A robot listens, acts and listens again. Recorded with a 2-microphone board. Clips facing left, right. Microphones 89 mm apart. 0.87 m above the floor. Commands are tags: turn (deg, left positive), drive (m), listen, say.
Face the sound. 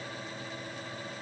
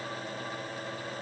<listen/>
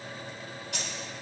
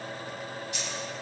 <turn deg="65"/>
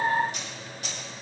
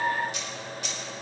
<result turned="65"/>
<turn deg="40"/>
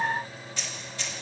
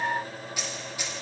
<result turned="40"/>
<turn deg="-15"/>
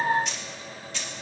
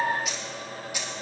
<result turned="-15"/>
<turn deg="-15"/>
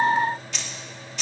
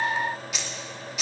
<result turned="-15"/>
<say>Found it: keys jangling, straight ahead.</say>